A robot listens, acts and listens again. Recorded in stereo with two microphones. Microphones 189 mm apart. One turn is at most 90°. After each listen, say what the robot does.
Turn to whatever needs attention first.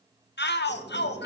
Turn 65° left.
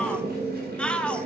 Facing the shout.